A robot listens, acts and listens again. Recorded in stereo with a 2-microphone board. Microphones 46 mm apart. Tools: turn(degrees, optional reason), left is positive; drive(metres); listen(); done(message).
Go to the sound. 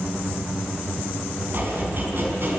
turn(degrees=-50, reason="The chopping: about 50° right or 130° right.")
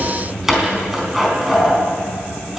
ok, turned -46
drive(metres=1.0)
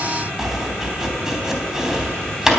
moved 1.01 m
turn(degrees=-10, reason="The chopping is now 10° right.")
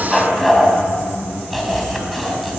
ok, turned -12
drive(metres=1.0)
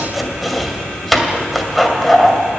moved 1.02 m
drive(metres=1.0)
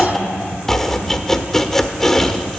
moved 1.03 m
turn(degrees=10, reason="The chopping is now 10° left.")
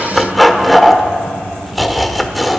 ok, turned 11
drive(metres=1.0)
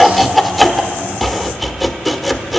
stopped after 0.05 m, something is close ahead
done("Arrived at the chopping, straight ahead.")